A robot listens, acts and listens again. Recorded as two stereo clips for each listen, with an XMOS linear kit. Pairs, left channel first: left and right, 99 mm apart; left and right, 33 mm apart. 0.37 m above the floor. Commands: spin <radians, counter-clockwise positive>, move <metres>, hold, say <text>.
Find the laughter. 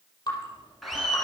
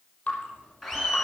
spin 0.52
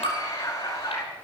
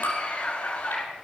spin 2.53
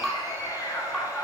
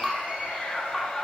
spin 0.61
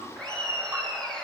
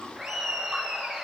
spin 0.17
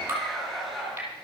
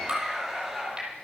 say Facing the laughter.